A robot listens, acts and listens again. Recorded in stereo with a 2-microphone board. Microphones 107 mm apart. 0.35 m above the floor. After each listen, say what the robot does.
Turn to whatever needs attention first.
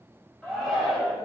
Turn 30° left.
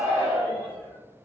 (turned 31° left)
Turn 30° right.
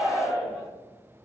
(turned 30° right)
Facing the shout, 1 to 2 m away.